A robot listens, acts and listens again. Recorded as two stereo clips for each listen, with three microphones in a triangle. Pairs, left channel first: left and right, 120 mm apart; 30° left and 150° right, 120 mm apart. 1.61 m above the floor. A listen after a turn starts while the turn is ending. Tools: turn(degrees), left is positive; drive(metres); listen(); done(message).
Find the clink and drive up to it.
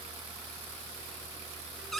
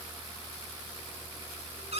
listen()
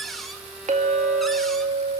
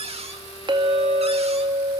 turn(degrees=-100)
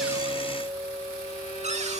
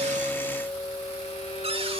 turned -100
turn(degrees=-30)
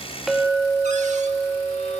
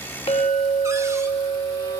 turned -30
drive(metres=1.0)
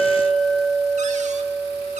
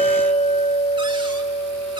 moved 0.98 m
drive(metres=1.0)
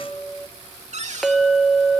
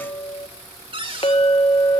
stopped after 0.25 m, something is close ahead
done("Arrived at the clink, straight ahead.")